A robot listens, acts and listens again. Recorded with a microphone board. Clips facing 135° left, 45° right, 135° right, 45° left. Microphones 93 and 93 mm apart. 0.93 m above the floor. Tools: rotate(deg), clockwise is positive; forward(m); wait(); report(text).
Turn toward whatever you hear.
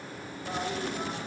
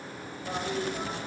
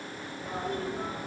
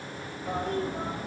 rotate(-40)
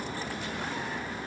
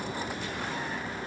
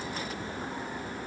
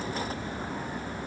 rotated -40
rotate(-10)
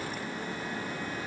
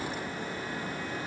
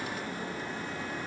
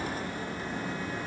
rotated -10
wait()
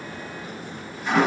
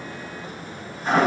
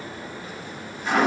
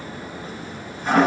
report("Facing the toilet flushing.")